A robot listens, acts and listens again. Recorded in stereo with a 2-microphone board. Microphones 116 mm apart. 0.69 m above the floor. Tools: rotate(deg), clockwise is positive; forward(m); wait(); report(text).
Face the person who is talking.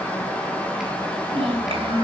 rotate(50)
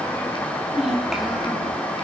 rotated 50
report("Facing the child speaking.")